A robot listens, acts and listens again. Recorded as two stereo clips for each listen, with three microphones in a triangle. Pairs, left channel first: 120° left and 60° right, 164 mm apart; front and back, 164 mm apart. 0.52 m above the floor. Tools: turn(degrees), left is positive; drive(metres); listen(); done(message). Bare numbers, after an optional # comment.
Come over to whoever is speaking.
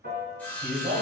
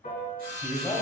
# The man speaking: 85° right.
turn(-85)
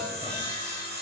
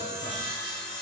listen()
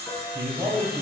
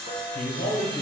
# The man speaking is now 10° left.
turn(10)
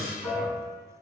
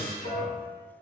listen()
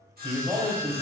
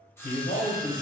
drive(1.0)
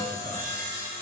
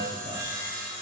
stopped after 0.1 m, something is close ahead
listen()
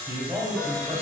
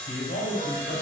done("Something is in my way. I am facing the man speaking but have not reached it.")